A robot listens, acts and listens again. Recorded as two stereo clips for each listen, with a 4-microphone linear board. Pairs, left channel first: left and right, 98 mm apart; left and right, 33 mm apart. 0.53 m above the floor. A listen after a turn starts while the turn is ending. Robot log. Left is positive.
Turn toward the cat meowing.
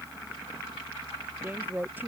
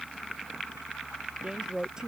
cmd idle
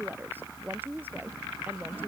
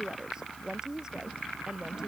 cmd idle
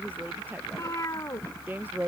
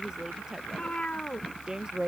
note: The cat meowing: about 35° left or 145° left.
cmd yaw +35
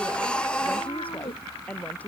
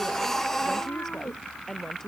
cmd idle
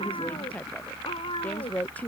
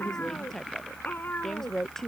note: So it is at 115° left.
cmd yaw +115
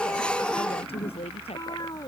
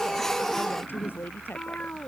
note: The cat meowing is now 40° left.
cmd yaw +40
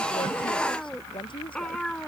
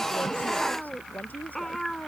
end: Facing the cat meowing.